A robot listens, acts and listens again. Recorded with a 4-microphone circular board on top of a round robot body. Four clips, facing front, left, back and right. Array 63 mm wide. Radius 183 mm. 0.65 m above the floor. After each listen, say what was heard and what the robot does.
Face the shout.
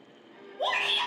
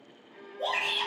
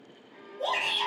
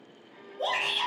The shout: 10° right. Turn 10° right.
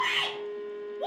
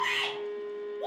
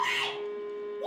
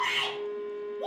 Found it: a shout, straight ahead.